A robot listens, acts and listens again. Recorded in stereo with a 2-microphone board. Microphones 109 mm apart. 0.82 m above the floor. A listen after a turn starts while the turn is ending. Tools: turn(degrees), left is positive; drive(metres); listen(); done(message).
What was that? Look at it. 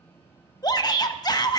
turn(degrees=35)
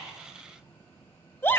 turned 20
turn(degrees=20)
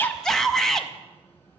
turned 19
done("Found it: a shout, straight ahead, under 1 m away.")